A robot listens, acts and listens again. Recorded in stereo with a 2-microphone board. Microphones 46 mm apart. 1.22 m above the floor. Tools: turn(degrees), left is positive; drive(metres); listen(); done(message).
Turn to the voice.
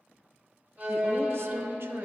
turn(degrees=-65)
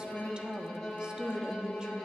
turn(degrees=-20)
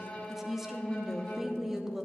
turn(degrees=-10)
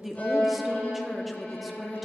done("Found it: a woman speaking, straight ahead, under 1 m away.")